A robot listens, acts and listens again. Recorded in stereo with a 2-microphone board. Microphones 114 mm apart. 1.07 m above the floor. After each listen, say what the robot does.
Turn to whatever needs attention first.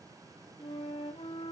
Keep listening.
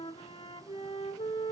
Keep listening.
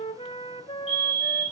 Turn 75° right.
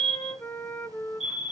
Facing the fire alarm.